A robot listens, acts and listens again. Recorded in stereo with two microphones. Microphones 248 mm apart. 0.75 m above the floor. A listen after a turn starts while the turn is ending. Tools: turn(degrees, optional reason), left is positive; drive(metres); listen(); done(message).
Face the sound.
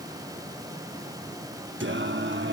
turn(degrees=-50, reason="The singing: about 50° right or 130° right.")
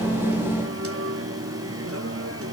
turn(degrees=-80, reason="So it is at 80° right.")
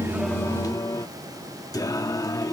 turn(degrees=15, reason="The singing is now 15° left.")
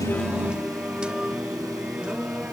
done("Facing the singing.")